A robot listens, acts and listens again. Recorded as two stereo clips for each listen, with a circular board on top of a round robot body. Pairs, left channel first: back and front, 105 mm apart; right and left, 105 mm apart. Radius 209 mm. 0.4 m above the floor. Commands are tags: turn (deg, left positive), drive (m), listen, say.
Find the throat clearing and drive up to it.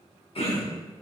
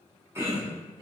<turn deg="155"/>
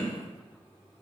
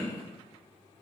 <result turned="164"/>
<turn deg="-10"/>
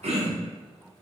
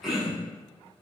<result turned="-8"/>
<drive m="1.0"/>
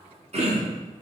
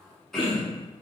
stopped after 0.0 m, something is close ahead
<say>Blocked. The throat clearing is further on, straight ahead.</say>